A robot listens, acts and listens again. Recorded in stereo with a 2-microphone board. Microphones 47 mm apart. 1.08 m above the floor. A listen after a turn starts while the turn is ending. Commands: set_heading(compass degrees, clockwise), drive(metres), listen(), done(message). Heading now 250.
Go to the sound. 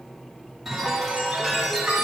set_heading(280)
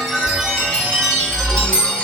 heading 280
set_heading(255)
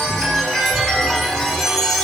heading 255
set_heading(240)
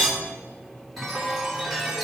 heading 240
drive(1.0)
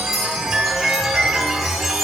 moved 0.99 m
drive(1.0)
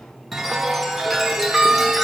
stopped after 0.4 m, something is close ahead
done("Arrived at the chime, straight ahead.")